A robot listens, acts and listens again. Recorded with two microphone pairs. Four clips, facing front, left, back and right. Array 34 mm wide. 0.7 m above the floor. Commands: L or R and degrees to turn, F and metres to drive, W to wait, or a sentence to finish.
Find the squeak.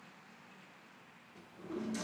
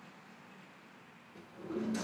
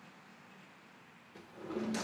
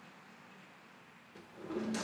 W
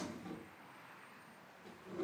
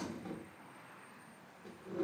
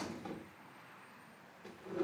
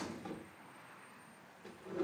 W
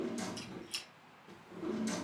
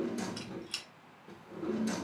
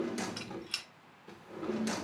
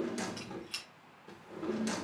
L180
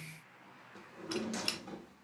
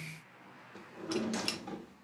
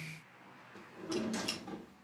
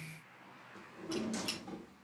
L55
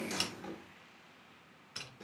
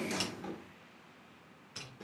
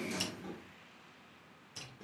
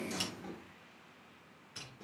L25
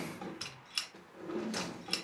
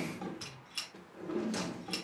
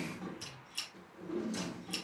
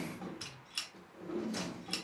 Facing the squeak.